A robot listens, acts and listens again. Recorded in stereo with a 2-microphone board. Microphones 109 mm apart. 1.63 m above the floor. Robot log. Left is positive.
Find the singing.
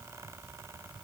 cmd idle
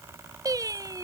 note: The singing: about 35° right or 145° right.
cmd yaw -35
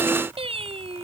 note: So it is at 110° right.
cmd yaw -110
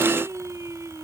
note: The singing is now 30° right.
cmd yaw -30
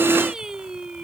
end: Found it: singing, straight ahead.